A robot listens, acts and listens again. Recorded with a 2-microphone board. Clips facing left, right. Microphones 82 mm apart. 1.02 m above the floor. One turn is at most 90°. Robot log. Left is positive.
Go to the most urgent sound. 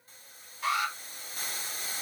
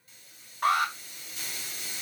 note: The alarm: about 60° right or 120° right.
cmd yaw -60
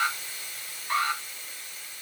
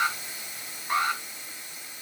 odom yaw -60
note: So it is at 25° right.
cmd yaw -25
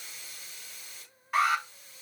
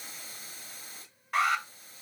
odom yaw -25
cmd fwd 1.0
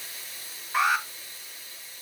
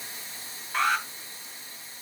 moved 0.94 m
note: The alarm is now 10° left.
cmd yaw +10
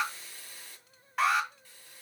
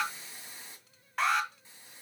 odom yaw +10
cmd fwd 1.0
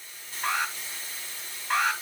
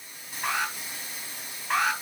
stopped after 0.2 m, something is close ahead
end: I am next to the alarm.